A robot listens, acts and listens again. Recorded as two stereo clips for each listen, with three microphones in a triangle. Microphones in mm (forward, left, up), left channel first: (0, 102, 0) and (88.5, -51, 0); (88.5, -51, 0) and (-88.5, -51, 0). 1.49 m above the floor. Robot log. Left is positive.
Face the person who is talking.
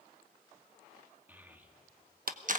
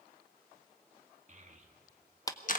note: The child speaking: 140° right.
cmd yaw -140
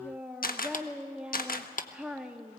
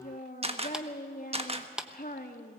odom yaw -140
note: The child speaking is now 25° left.
cmd yaw +25
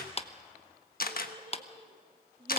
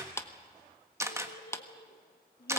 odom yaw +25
end: Facing the child speaking, 1 to 2 m away.